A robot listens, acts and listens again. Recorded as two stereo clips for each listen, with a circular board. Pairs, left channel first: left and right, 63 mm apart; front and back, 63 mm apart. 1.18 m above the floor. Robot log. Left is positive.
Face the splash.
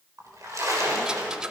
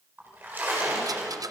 note: The splash: 120° right.
cmd yaw -120
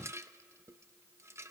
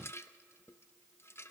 end: I heard a splash from this way, but can't make it out now.